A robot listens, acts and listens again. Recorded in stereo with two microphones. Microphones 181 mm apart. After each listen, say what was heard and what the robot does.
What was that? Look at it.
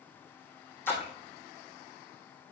Turn 30° left.
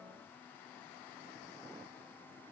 Keep listening.
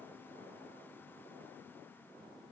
I heard a splash, but can't make it out now. It was about 15° right or 135° left.